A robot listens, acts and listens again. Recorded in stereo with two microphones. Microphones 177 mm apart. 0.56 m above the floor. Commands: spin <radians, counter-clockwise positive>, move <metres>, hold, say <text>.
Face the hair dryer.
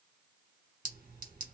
hold
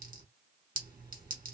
hold
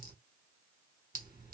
say I can't make out a hair dryer, only a clink.